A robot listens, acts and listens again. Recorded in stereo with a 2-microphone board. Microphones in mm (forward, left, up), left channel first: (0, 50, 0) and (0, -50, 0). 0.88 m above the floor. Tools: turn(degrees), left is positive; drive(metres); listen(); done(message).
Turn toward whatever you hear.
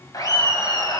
turn(degrees=40)
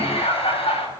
turn(degrees=95)
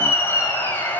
turn(degrees=15)
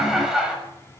turn(degrees=-10)
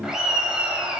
turn(degrees=-10)
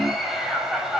done("Found it: laughter, straight ahead.")